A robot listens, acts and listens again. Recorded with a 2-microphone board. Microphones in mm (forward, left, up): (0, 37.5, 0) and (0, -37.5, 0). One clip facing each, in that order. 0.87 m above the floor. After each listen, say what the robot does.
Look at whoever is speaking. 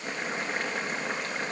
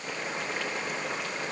Keep listening.
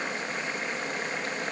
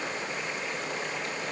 Keep listening.
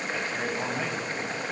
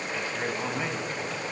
Turn 30° left.
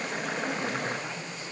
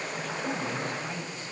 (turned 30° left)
Found it: a man speaking, straight ahead.